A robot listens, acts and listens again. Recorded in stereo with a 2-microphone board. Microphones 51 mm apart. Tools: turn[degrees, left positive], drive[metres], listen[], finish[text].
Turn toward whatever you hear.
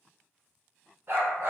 Thought: The dog barking: about 55° right or 125° right.
Action: turn[-55]
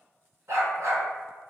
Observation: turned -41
Thought: So it is at 80° right.
Action: turn[-80]
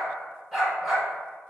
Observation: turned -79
Action: finish[Facing the dog barking, 1 to 2 m away.]